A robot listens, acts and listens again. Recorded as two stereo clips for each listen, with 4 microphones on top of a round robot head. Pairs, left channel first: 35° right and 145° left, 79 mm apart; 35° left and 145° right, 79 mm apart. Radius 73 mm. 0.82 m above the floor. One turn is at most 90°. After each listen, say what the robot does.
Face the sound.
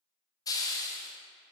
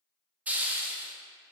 Turn 70° right.
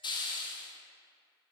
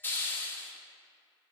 Turn 25° right.
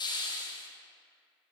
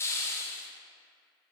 Turn 20° right.
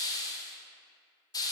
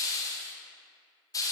Facing the hiss, 1 to 2 m away.